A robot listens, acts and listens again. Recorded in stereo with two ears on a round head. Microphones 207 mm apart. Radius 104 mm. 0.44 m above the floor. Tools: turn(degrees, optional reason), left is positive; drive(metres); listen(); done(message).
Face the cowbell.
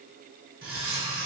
listen()
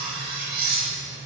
listen()
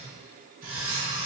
done("I can't make out a cowbell, only cutlery clinking.")